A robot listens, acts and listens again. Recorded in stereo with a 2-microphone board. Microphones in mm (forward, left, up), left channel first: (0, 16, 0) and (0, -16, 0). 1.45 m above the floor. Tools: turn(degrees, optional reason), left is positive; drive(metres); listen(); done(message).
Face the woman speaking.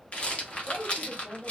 turn(degrees=90)
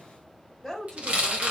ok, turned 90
done("Found it: a woman speaking, straight ahead, 1 to 2 m away.")